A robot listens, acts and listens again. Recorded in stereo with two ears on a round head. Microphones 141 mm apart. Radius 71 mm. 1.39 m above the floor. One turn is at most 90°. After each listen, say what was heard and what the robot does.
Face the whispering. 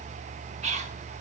The whispering: about 45° right or 135° right. Turn 45° right.
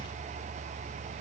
Keep listening.
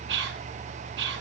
So it is at 85° right. Turn 85° right.
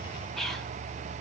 Found it: whispering, straight ahead, 1 to 2 m away.